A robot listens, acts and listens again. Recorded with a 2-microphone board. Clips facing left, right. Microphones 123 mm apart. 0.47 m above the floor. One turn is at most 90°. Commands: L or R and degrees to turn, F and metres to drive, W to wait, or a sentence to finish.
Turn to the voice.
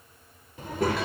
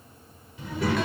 L45
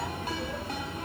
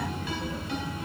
L75
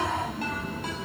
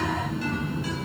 Facing the child speaking, 1 to 2 m away.